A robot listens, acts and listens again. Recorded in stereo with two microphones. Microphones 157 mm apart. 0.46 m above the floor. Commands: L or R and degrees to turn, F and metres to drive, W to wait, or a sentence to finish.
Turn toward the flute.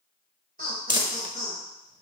W
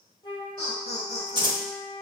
L30
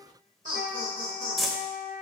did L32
L115
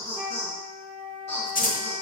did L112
Found it: a flute, straight ahead, 1 to 2 m away.